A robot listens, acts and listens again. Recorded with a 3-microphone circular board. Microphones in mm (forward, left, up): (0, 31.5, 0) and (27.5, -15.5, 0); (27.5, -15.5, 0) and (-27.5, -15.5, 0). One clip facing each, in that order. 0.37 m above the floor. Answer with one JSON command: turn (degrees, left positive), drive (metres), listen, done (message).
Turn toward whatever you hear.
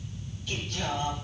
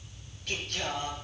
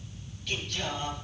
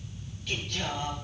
{"turn": -90}
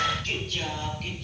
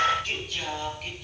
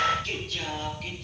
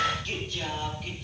{"turn": 20}
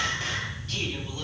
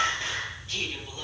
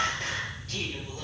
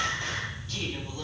{"done": "Facing the singing."}